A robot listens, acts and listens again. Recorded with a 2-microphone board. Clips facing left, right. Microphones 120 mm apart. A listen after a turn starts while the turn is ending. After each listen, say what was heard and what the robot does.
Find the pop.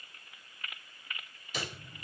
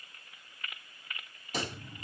The pop: about 45° right or 135° right. Turn 45° right.
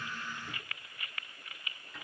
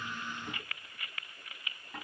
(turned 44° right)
Keep listening.
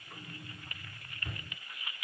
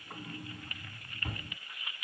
I heard a pop, but can't make it out now. It was about straight ahead or 90° right.